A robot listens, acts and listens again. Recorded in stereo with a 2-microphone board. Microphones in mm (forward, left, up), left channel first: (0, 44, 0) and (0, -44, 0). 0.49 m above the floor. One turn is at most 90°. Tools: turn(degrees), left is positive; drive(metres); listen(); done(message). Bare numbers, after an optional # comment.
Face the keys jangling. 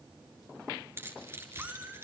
# The keys jangling: about 30° right or 150° right.
turn(-30)
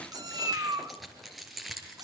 done("Found it: keys jangling, straight ahead.")